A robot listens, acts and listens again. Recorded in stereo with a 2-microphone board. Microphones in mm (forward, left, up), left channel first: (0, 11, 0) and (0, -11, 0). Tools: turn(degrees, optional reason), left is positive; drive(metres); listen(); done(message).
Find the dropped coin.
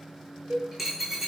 turn(degrees=-30)
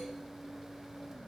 listen()
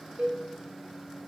done("I heard a dropped coin, but can't make it out now. It was about 20° left or 140° right.")